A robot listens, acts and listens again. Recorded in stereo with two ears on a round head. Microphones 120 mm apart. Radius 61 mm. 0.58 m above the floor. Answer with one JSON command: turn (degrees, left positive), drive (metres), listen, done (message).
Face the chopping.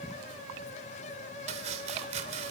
{"turn": -55}
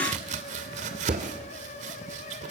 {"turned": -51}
{"turn": -65}
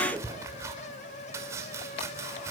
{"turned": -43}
{"turn": -25}
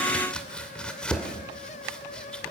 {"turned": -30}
{"turn": 10}
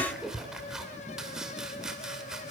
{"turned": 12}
{"done": "Facing the chopping, 2 to 4 m away."}